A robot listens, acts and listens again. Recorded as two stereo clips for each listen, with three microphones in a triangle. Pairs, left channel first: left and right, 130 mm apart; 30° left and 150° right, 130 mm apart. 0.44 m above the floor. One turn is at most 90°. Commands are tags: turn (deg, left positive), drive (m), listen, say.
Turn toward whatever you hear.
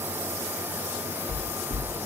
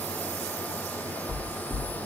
<turn deg="-45"/>
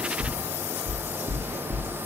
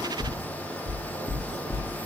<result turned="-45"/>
<turn deg="-15"/>
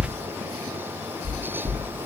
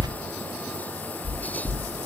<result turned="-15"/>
<say>Found it: knocking, straight ahead.</say>